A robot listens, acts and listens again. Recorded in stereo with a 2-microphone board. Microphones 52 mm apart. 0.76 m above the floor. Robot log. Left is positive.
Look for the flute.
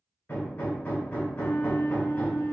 note: The flute: about 75° left or 105° left.
cmd yaw +75
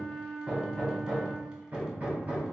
note: So it is at 15° left.
cmd yaw +15
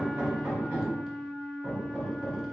end: Facing the flute, 1 to 2 m away.